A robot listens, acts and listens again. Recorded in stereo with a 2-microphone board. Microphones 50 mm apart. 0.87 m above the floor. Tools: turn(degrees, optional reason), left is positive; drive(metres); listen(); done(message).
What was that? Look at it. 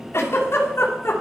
turn(degrees=55, reason="The giggle: about 55° left or 125° left.")
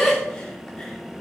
done("Found it: a giggle, straight ahead.")